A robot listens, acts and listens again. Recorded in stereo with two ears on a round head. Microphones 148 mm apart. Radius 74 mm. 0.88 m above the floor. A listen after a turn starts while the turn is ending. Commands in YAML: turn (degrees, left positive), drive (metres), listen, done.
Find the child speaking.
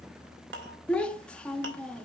turn: 30
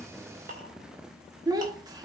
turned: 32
turn: -25
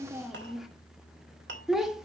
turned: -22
done: "Facing the child speaking."